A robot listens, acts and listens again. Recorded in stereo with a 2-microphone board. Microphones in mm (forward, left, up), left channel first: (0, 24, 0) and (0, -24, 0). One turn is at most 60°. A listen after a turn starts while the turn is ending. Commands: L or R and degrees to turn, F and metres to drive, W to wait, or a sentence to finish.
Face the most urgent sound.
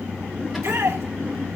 R60
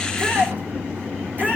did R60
R40
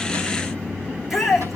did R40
Facing the shout, over 4 m away.